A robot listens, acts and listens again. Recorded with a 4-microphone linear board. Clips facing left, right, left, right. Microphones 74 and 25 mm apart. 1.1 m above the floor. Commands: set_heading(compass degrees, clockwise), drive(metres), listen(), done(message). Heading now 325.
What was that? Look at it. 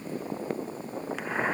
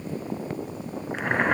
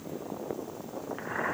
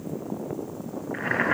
set_heading(25)
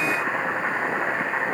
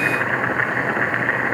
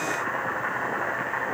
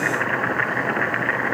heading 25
set_heading(90)
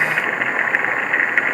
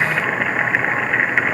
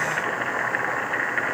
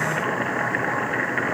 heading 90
done("Found it: boiling, straight ahead.")